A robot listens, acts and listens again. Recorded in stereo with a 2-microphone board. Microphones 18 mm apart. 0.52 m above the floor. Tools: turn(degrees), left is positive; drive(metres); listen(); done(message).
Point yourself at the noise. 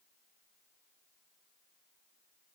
listen()
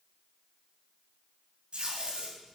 turn(degrees=-75)
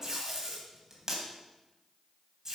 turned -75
turn(degrees=-25)
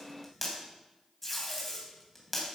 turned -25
turn(degrees=15)
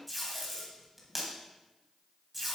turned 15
done("Facing the tape being pulled, 2 to 4 m away.")